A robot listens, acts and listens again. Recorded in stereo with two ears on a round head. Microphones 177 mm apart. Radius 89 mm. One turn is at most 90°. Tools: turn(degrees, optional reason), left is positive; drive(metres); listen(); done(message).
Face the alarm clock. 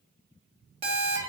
turn(degrees=-30, reason="The alarm clock: about 30° right or 150° right.")
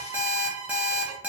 turn(degrees=-10, reason="So it is at 10° right.")
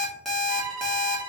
done("Facing the alarm clock, 1 to 2 m away.")